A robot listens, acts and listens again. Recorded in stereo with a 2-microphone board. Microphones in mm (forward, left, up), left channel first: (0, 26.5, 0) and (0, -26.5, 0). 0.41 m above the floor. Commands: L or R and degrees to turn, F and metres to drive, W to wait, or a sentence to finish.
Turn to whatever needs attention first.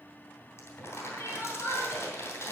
L70
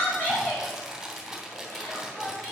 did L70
L40
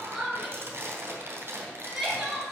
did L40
Found it: crying, straight ahead.